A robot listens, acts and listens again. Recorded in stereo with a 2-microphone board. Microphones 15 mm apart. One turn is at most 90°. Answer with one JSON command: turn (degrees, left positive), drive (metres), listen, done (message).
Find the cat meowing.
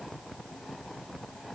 {"listen": true}
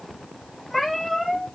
{"turn": 30}
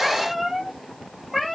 {"turn": -20}
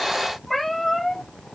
{"done": "Facing the cat meowing."}